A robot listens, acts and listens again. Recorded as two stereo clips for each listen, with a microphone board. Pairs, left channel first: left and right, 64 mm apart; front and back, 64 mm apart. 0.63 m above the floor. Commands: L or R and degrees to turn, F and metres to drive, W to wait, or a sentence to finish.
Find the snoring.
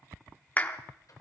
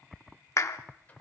W
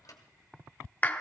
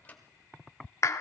W
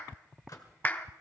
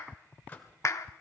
I can't make out snoring to turn to.